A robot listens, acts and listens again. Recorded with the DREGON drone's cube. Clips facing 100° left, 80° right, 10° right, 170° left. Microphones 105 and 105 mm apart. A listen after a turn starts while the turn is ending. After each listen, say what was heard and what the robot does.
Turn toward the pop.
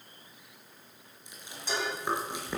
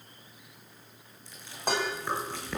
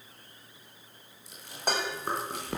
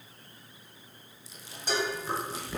Keep listening.
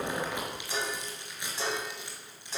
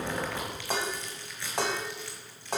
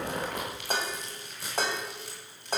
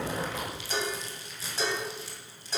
Keep listening.
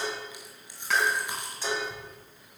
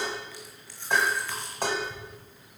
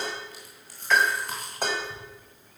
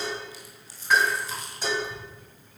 The pop: 90° left. Turn 90° left.
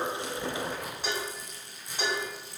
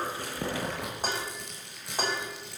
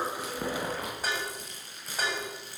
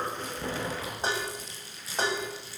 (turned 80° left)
Nothing new. It was at 10° left. Turn 10° left.
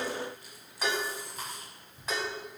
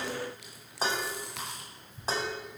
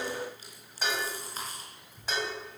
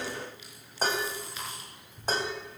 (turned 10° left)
Facing where the pop came from. I can't hear it now.